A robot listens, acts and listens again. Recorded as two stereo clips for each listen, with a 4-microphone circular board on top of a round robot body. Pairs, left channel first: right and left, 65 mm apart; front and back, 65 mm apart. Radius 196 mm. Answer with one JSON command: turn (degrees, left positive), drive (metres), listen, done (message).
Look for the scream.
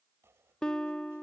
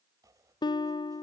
{"listen": true}
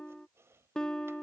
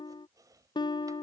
{"listen": true}
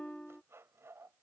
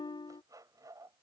{"done": "I can't make out a scream, only a guitar and chopping."}